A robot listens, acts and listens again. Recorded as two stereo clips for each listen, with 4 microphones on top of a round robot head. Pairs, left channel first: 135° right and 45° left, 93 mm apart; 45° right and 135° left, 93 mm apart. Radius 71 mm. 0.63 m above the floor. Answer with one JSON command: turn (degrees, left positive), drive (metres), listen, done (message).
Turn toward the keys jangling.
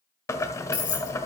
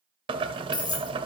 {"turn": -90}
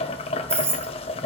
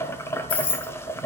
{"turn": -20}
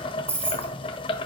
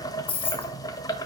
{"turn": -20}
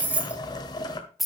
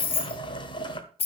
{"turn": -45}
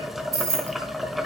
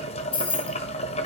{"turn": -15}
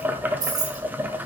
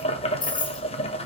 {"done": "Facing the keys jangling."}